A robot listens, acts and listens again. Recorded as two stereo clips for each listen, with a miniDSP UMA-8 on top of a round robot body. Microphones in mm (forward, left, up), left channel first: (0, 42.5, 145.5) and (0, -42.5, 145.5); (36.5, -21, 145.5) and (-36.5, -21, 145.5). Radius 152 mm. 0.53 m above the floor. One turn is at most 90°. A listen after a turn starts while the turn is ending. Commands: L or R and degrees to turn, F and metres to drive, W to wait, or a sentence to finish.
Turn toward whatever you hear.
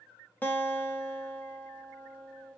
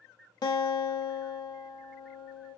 L20
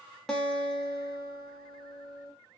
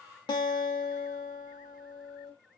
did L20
Found it: a guitar, straight ahead.